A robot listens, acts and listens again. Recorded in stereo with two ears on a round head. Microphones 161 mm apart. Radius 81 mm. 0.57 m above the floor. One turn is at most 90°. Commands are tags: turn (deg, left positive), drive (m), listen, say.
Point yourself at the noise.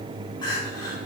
<turn deg="25"/>
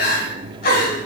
<turn deg="90"/>
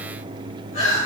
<turn deg="40"/>
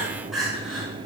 <say>Found it: crying, straight ahead.</say>